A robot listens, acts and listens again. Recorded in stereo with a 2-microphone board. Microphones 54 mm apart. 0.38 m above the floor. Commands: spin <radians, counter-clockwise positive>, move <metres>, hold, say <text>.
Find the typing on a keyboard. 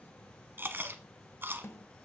hold
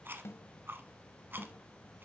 hold
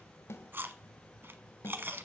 say I can't make out typing on a keyboard to turn to.